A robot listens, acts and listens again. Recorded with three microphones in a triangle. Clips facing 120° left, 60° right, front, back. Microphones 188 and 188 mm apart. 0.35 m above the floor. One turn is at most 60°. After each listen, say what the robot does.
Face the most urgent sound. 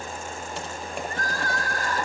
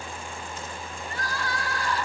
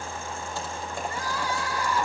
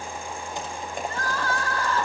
Turn 60° left.
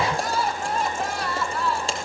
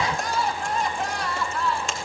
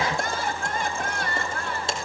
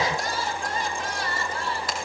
Turn 35° left.
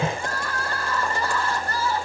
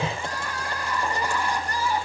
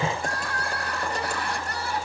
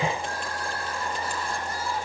Turn 15° left.
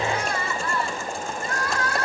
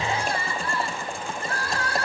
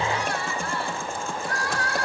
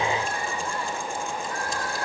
Facing the crying, 2 to 4 m away.